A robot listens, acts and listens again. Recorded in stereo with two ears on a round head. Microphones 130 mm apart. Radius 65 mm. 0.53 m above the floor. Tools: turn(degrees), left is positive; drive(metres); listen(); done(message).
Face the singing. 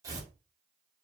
listen()
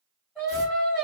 turn(degrees=-30)
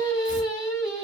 turn(degrees=30)
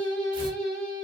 done("Facing the singing.")